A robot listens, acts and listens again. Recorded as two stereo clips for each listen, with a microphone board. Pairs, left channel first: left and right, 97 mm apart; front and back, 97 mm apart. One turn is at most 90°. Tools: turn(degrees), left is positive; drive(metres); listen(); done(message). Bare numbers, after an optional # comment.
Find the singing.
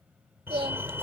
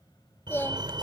# The singing: 65° right.
turn(-65)
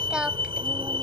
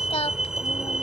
# The singing is now 10° right.
turn(-10)
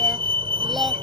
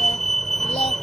listen()
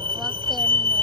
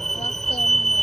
listen()
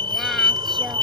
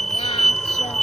done("I heard singing from this way, but can't make it out now.")